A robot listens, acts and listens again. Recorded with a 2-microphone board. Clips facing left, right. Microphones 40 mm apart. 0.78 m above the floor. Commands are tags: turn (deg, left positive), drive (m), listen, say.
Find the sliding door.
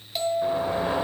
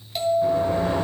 <turn deg="30"/>
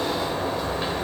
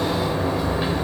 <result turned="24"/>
<say>Found it: a sliding door, straight ahead.</say>